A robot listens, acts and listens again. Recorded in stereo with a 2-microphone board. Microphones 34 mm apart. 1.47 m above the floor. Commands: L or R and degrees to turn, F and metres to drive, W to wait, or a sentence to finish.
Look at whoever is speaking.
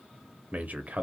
R50
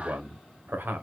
R80
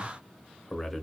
Found it: a man speaking, straight ahead.